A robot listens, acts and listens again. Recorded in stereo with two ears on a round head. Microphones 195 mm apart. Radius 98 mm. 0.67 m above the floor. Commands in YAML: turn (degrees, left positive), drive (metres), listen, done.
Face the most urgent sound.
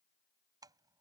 listen: true
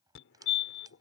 turn: 65
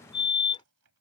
turn: 25
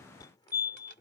turn: 20
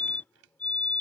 done: "Facing the fire alarm."